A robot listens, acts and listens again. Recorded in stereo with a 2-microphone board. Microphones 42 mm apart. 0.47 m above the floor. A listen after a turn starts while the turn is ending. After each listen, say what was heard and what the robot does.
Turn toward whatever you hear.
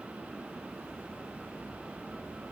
Keep listening.
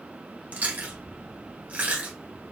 The chewing: about 45° right or 135° right. Turn 45° right.
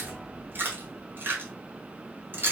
So it is at 85° right. Turn 85° right.
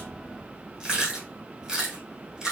The chewing is now 20° right. Turn 20° right.
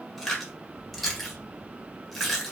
Found it: chewing, straight ahead, 1 to 2 m away.